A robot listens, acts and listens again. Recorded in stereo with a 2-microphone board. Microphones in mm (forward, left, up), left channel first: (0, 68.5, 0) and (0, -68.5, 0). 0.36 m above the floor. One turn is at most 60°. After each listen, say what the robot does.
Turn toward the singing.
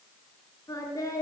Turn 25° left.
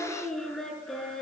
Found it: singing, straight ahead, over 4 m away.